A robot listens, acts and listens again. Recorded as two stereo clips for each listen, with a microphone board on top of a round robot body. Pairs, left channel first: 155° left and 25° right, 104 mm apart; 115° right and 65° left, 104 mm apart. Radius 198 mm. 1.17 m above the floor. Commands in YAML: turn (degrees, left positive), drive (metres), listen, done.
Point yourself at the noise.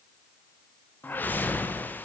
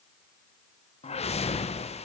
turn: -130
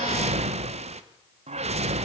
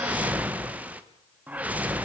turn: -10
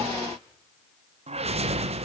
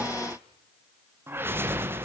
done: "Found it: a whoosh, straight ahead, 1 to 2 m away."